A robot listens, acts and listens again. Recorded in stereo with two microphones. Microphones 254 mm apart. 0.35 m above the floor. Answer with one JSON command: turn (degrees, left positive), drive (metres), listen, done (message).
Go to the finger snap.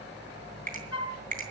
{"turn": -30}
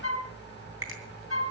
{"turn": -115}
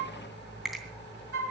{"drive": 1.0}
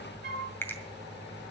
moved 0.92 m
{"turn": 10}
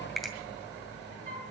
{"drive": 1.0}
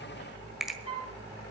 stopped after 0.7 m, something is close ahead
{"done": "I am next to the finger snap."}